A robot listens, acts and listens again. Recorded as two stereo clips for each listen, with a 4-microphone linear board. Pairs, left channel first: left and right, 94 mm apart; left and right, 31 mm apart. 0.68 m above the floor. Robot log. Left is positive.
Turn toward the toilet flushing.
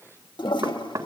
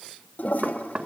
note: The toilet flushing: about 60° left or 120° left.
cmd yaw +60
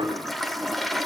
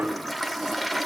end: Facing the toilet flushing, 1 to 2 m away.